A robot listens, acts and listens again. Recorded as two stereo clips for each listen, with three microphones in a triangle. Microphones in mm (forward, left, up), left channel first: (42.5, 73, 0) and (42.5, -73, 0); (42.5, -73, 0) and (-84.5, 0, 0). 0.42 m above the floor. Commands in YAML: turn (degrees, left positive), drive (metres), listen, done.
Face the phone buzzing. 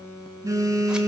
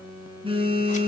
turn: -160
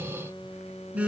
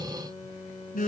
turn: -10
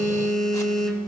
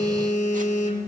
done: "Found it: a phone buzzing, straight ahead."